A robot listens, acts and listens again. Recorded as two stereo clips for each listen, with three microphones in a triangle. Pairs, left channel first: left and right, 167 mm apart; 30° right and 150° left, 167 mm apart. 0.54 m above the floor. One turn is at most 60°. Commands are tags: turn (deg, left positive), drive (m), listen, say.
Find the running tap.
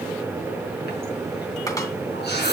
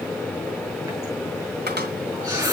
<turn deg="60"/>
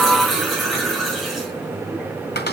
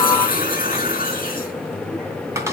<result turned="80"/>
<say>Facing the running tap.</say>